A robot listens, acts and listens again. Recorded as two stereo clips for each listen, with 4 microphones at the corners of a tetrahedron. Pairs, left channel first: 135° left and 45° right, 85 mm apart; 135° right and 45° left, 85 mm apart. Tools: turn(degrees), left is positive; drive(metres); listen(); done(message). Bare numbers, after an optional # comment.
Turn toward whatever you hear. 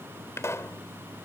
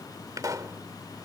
# The pop: 85° left.
turn(85)
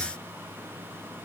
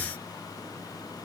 done("Facing where the pop came from. I can't hear it now.")